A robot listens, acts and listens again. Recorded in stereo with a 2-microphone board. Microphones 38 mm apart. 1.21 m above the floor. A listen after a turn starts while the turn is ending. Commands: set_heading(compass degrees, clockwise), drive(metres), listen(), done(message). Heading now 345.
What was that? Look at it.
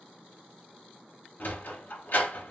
set_heading(290)
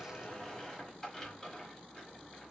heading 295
listen()
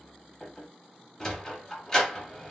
set_heading(280)
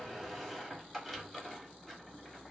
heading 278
done("Facing the sliding door, under 1 m away.")